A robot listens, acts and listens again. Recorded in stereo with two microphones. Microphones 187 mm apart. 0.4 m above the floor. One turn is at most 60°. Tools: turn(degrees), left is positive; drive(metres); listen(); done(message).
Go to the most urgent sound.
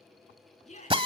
turn(degrees=35)
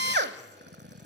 listen()
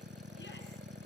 listen()
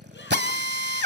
done("I heard a shout, but can't make it out now. It was about straight ahead or 110° left. I did not reach it.")